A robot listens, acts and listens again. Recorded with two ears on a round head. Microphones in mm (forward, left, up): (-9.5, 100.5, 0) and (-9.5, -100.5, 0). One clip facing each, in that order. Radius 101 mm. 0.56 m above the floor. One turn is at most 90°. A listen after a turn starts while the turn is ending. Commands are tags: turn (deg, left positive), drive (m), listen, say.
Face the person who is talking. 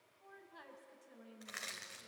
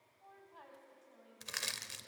<turn deg="25"/>
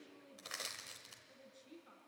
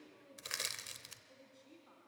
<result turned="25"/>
<say>Facing the woman speaking, over 4 m away.</say>